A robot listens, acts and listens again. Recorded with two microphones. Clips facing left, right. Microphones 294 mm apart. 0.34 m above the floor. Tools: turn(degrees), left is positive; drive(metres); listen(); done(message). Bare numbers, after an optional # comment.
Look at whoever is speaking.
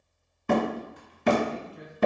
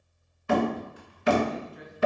# The man speaking: about 35° left or 145° left.
turn(35)
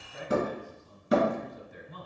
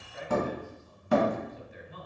# So it is at 110° left.
turn(110)
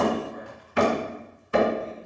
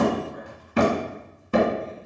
listen()
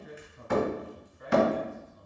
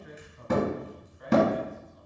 # The man speaking is now 35° left.
turn(35)
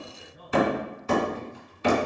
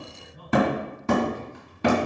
# The man speaking is now 15° left.
turn(15)
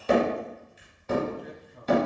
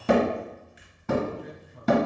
done("Found it: a man speaking, straight ahead, 1 to 2 m away.")